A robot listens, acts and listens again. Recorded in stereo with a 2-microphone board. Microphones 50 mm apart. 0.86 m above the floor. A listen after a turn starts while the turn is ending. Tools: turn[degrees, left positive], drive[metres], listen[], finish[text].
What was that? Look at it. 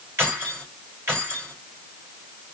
Thought: The keys jangling: about 55° right or 125° right.
Action: turn[-55]
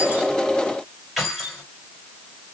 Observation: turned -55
Action: finish[Found it: keys jangling, straight ahead, 2 to 4 m away.]